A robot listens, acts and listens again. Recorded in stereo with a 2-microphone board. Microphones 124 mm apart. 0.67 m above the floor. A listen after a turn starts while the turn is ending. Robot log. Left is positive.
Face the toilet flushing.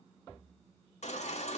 cmd idle
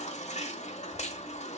cmd idle
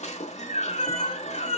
end: I can't make out a toilet flushing, only a baby crying.